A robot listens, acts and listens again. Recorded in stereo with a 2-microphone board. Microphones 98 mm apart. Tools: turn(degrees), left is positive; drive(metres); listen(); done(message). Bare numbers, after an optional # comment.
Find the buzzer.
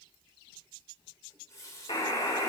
# The buzzer: about 65° left or 115° left.
turn(65)
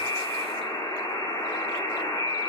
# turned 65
# So it is at 50° left.
turn(50)
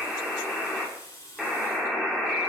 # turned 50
done("Facing the buzzer, 1 to 2 m away.")